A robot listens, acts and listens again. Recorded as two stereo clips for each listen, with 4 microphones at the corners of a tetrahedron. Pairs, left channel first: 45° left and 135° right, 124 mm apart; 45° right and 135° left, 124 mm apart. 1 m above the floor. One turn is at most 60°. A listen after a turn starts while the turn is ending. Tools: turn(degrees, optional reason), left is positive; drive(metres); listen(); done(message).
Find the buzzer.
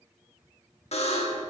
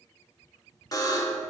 turn(degrees=15, reason="The buzzer: 15° left.")
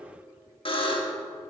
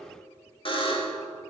done("Facing the buzzer.")